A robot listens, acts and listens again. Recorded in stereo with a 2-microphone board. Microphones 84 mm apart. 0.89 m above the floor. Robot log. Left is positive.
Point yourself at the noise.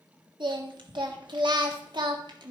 note: The singing: about 60° right or 120° right.
cmd yaw -60
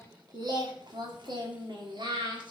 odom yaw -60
note: So it is at 70° right.
cmd yaw -70
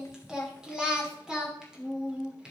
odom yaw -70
note: The singing is now 10° right.
cmd yaw -10
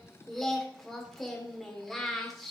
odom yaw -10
end: Found it: singing, straight ahead, 2 to 4 m away.